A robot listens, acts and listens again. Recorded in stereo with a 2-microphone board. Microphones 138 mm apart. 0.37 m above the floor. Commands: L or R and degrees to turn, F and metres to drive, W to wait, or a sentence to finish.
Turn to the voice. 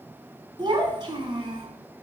R35
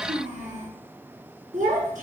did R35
R110
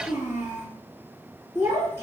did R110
R20
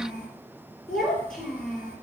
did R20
Found it: a child speaking, straight ahead, over 4 m away.